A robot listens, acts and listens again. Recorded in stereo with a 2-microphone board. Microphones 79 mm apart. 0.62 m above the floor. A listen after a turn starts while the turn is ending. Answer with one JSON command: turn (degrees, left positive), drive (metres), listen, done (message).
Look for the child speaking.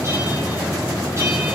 {"listen": true}
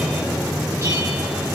{"listen": true}
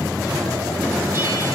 {"done": "I can't make out a child speaking to turn to."}